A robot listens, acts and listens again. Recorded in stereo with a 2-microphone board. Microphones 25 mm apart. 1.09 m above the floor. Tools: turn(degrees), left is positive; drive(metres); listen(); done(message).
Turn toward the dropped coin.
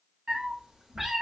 listen()
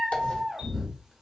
turn(degrees=60)
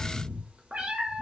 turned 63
listen()
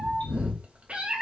done("I heard a dropped coin, but can't make it out now. It was about 5° right or 55° left.")